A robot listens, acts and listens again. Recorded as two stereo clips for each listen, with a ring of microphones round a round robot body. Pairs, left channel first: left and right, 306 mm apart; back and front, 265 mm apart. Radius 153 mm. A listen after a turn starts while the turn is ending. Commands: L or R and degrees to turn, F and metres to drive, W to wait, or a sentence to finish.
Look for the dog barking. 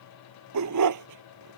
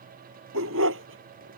R55
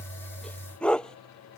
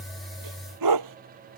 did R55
Found it: a dog barking, straight ahead.